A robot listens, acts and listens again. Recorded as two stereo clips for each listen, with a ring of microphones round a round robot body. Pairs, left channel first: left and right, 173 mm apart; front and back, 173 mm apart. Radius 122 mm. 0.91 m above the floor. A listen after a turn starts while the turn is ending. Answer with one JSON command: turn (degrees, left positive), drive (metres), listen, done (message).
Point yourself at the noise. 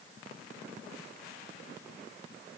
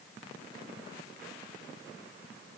{"listen": true}
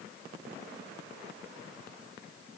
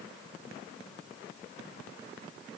{"listen": true}
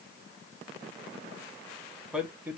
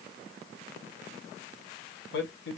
{"turn": -10}
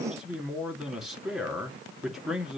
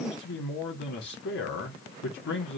{"done": "Found it: a man speaking, straight ahead, 2 to 4 m away."}